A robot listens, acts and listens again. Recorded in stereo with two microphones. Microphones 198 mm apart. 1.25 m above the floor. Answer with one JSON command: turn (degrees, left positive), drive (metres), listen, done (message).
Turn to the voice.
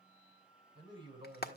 {"turn": -25}
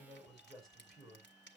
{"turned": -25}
{"done": "Facing the man speaking, over 4 m away."}